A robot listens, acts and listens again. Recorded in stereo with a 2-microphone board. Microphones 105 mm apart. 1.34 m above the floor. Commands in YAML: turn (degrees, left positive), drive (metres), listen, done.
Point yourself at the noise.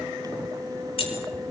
turn: 55
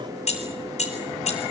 turn: 80
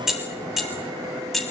done: "Facing the keys jangling."